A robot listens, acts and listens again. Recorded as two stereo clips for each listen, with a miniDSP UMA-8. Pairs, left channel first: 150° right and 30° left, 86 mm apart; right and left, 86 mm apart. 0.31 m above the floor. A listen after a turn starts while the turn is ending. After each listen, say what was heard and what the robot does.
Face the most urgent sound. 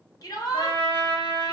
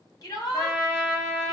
The shout: 115° right. Turn 115° right.
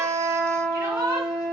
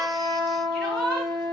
The shout is now 10° right. Turn 10° right.
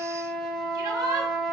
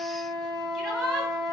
Facing the shout.